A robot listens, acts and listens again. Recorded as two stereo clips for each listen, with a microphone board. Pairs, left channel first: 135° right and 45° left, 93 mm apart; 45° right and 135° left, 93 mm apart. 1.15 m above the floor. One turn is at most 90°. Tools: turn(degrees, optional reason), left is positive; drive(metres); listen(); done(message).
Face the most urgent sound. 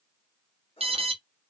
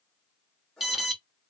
turn(degrees=45, reason="The alarm: 45° left.")
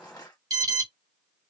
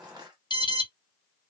done("Found it: an alarm, straight ahead.")